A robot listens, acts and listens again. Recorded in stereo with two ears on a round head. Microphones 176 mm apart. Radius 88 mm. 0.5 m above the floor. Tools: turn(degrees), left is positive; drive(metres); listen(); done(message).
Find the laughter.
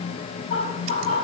turn(degrees=35)
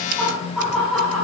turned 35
done("Found it: laughter, straight ahead.")